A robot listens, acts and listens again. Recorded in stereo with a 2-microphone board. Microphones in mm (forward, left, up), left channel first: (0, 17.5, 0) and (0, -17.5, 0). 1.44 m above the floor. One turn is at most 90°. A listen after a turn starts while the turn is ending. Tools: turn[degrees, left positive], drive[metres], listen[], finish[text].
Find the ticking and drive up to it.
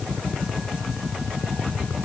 Action: listen[]
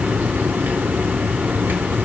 Action: listen[]
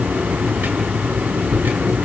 Action: finish[I can't make out ticking, only a hiss.]